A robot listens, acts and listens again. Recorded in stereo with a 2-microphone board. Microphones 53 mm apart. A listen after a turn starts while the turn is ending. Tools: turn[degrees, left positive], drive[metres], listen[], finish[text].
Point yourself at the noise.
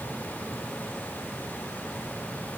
Action: listen[]
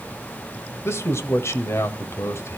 Thought: The man speaking: about 60° left or 120° left.
Action: turn[60]
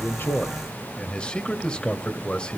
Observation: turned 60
Thought: So it is at 25° left.
Action: turn[25]
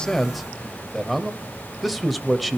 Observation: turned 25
Action: finish[Found it: a man speaking, straight ahead.]